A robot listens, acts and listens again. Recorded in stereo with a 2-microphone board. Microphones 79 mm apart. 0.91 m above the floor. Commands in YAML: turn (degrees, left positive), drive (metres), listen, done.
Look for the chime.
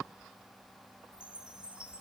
turn: -30
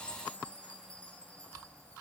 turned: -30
turn: 15
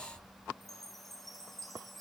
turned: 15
done: "Facing the chime."